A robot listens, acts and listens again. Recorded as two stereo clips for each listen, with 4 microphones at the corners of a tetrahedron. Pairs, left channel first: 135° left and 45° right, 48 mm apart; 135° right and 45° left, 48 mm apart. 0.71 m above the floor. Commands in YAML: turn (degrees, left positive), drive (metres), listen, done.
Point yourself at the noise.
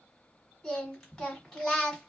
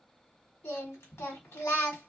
turn: -150
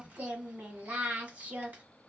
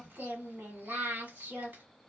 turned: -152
done: "Facing the singing, 1 to 2 m away."